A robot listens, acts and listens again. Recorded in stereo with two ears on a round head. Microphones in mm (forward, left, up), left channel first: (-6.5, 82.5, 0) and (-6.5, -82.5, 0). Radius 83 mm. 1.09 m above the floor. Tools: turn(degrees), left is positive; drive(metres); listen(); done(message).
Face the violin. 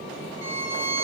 turn(degrees=-30)
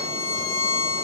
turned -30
turn(degrees=15)
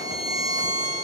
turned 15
done("Found it: a violin, straight ahead.")